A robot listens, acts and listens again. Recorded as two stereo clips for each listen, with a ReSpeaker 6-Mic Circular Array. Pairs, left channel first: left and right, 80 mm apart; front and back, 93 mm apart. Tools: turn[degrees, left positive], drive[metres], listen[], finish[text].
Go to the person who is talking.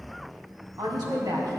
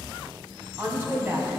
Thought: The woman speaking: 115° right.
Action: turn[-115]
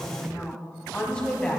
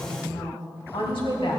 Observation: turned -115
Thought: The woman speaking is now 15° left.
Action: turn[15]
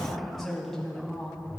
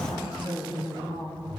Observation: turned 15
Action: drive[1.0]
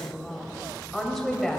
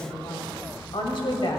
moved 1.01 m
Action: drive[1.0]
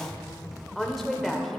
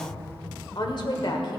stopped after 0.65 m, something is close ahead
Action: finish[I am next to the woman speaking.]